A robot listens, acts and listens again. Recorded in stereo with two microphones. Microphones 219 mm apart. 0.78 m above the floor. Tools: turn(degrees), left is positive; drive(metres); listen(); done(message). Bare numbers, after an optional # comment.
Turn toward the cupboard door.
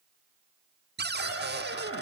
# The cupboard door: about 50° right or 130° right.
turn(-50)
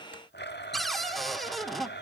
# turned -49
done("Facing the cupboard door, 1 to 2 m away.")